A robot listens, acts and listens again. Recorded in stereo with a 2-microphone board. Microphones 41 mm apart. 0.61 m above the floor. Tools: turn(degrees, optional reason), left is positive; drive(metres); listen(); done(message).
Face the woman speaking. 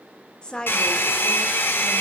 turn(degrees=20, reason="The woman speaking: about 20° left or 160° left.")
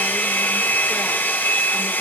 listen()
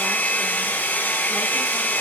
listen()
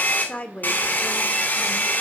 turn(degrees=145, reason="So it is at 145° left.")
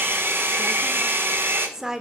turn(degrees=-10, reason="The woman speaking is now 10° right.")
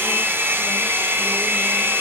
listen()
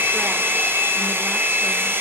listen()
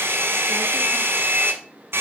done("Facing where the woman speaking came from. I can't hear it now.")